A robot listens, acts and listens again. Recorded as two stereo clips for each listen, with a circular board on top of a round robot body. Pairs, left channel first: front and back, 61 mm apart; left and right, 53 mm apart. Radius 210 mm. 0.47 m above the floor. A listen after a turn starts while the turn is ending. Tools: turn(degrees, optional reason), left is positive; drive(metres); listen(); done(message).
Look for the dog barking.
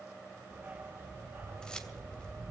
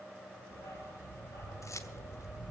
turn(degrees=115, reason="The dog barking: 115° left.")
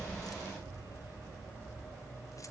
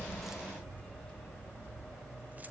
turn(degrees=15, reason="The dog barking is now 15° left.")
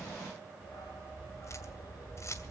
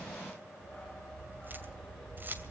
done("Found it: a dog barking, straight ahead, over 4 m away.")